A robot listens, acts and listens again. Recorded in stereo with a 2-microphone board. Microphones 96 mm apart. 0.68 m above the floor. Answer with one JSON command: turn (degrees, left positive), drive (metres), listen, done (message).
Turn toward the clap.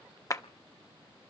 {"turn": 35}
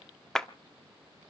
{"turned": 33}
{"done": "Facing the clap."}